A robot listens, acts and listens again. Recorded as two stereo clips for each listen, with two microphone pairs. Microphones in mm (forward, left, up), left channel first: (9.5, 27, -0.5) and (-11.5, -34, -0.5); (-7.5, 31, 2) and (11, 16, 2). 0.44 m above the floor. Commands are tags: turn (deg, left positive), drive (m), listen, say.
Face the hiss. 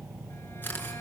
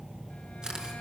<listen/>
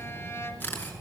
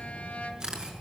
<listen/>
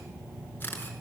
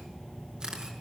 <say>I can't make out a hiss to turn to.</say>